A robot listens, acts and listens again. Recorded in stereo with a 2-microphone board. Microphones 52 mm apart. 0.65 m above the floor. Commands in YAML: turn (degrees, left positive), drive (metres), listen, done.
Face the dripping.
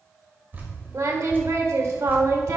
turn: -35
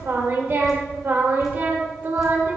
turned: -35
listen: true
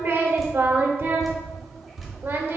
done: "Facing the dripping."